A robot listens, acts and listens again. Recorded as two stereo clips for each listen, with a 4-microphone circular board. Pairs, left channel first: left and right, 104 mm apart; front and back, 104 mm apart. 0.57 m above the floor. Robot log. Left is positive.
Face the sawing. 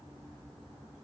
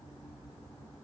cmd idle
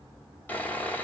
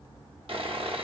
note: The sawing: 160° left.
cmd yaw +160
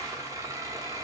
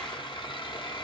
note: The sawing is now 35° right.
cmd yaw -35
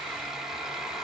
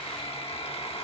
end: Found it: sawing, straight ahead, 1 to 2 m away.